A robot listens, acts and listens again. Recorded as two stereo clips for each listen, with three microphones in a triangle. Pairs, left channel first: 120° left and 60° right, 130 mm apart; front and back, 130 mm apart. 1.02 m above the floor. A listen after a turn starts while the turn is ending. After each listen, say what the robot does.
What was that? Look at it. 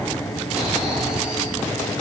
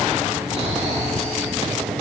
Turn 145° right.
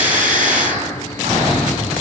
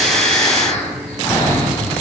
Turn 45° right.
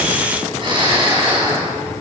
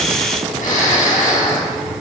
Turn 10° right.
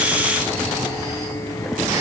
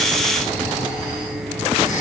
Facing the snoring, over 4 m away.